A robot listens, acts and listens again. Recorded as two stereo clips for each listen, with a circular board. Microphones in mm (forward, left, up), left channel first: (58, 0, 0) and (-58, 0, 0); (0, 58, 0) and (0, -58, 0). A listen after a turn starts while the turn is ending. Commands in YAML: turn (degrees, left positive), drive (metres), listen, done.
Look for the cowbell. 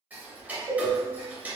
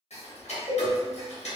turn: -135
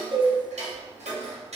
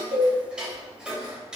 listen: true
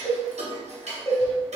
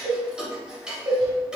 turn: -55
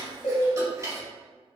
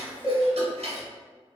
done: "Facing the cowbell, 1 to 2 m away."